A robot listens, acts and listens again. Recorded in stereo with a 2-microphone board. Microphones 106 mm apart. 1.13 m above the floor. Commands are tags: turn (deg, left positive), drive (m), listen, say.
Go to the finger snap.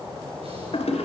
<listen/>
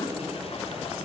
<listen/>
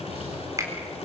<turn deg="-30"/>
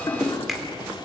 <drive m="1.0"/>
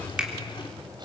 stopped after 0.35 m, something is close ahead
<turn deg="-10"/>
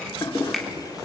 <say>Blocked. The finger snap is further on, straight ahead.</say>